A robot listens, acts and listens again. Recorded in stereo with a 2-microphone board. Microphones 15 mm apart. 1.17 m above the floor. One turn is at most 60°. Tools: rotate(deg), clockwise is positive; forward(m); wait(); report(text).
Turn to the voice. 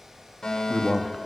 rotate(-15)
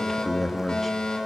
report("Facing the man speaking, 2 to 4 m away.")